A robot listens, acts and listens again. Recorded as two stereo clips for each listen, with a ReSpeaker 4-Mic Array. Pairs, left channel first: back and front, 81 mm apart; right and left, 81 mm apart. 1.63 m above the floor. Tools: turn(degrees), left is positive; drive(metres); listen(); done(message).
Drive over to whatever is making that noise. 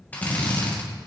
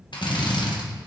turn(degrees=-110)
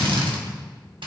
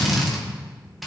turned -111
drive(metres=1.0)
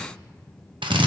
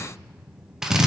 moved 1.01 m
drive(metres=1.0)
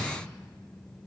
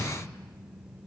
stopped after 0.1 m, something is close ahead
listen()
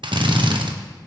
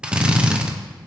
turn(degrees=15)
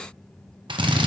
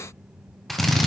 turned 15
done("I am next to the drill.")